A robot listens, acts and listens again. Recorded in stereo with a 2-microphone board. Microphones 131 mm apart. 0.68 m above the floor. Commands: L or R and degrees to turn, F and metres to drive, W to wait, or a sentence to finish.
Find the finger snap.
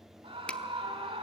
L30
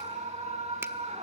W
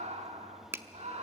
R20
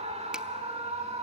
W
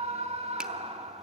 W
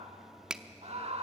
Facing the finger snap.